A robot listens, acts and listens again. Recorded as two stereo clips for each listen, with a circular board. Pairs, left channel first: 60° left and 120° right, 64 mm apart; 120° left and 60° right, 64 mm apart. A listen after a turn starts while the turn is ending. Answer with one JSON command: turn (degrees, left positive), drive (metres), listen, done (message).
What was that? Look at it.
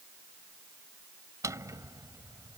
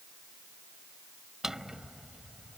{"turn": -145}
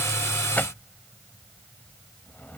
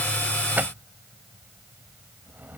{"done": "Facing the drawer."}